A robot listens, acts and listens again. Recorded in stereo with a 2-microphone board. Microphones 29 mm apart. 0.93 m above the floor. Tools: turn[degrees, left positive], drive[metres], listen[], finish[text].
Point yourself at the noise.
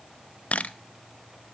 Thought: The camera shutter: about 55° left or 125° left.
Action: turn[55]
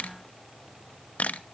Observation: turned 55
Thought: So it is at 65° left.
Action: turn[65]
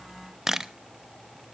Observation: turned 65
Thought: The camera shutter is now 15° right.
Action: turn[-15]
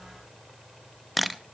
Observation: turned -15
Action: finish[Found it: a camera shutter, straight ahead, under 1 m away.]